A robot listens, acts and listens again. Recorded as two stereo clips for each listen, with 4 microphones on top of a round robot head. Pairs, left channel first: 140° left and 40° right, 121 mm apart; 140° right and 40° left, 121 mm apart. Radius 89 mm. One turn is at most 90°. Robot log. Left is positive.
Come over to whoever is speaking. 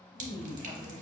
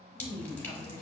note: The woman speaking: 15° left.
cmd yaw +15
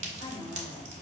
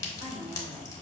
cmd fwd 1.0
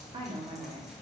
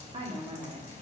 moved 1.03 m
cmd fwd 1.0
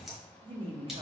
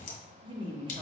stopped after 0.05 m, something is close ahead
end: Arrived at the woman speaking, straight ahead.